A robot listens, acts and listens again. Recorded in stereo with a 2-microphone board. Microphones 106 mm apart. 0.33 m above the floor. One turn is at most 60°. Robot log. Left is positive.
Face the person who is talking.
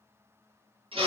cmd idle
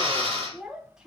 cmd yaw -30
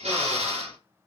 cmd idle
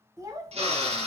note: So it is at 140° right.
cmd yaw -60
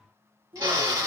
note: The child speaking is now 85° right.
cmd yaw -60
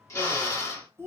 note: The child speaking is now 25° right.
cmd yaw -25
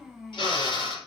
end: Facing the child speaking.